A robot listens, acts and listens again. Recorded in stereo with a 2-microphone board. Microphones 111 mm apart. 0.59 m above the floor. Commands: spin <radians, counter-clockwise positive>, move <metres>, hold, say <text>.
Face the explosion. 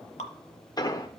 spin 0.70
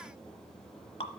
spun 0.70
hold
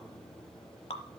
say I heard an explosion, but can't make it out now. It was about straight ahead or 100° left.